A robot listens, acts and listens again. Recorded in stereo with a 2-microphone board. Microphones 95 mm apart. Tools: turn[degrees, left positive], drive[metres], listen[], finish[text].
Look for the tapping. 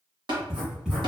Thought: The tapping: about 55° right or 125° right.
Action: turn[-55]
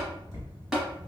Action: finish[Facing the tapping.]